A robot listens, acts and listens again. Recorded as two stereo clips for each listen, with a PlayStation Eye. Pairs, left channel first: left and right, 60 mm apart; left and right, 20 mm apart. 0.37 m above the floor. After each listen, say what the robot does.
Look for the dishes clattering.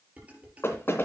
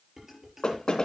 Turn 25° right.
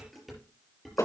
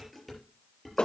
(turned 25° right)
Found it: dishes clattering, straight ahead.